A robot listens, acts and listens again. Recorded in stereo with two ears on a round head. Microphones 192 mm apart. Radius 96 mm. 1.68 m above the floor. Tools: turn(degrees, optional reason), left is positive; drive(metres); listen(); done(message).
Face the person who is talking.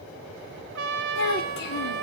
turn(degrees=55, reason="The child speaking: about 55° left or 125° left.")
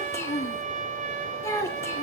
turn(degrees=15, reason="So it is at 15° left.")
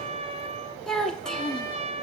done("Found it: a child speaking, straight ahead, 1 to 2 m away.")